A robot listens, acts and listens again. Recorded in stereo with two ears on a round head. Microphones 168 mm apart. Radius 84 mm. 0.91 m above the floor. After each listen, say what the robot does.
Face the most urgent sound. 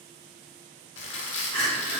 Turn 30° left.
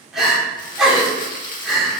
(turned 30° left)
Found it: crying, straight ahead.